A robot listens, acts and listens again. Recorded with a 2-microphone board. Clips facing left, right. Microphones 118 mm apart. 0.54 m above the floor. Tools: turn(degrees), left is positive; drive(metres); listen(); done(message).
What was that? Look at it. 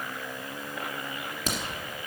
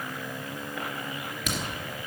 turn(degrees=35)
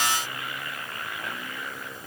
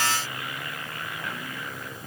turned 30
listen()
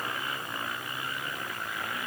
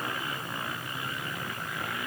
done("I heard a crack, but can't make it out now. It was about 5° left or 115° left.")